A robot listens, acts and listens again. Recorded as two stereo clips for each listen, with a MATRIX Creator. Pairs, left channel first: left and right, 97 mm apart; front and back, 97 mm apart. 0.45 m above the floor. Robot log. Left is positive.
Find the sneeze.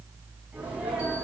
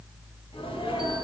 note: The sneeze: 15° right.
cmd yaw -15
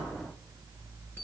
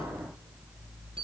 end: I heard a sneeze from this way, but can't make it out now.